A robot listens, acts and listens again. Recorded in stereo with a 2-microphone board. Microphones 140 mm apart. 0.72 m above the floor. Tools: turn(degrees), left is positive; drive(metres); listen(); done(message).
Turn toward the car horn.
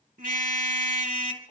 turn(degrees=-70)
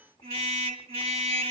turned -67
turn(degrees=-45)
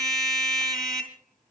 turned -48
done("Found it: a car horn, straight ahead.")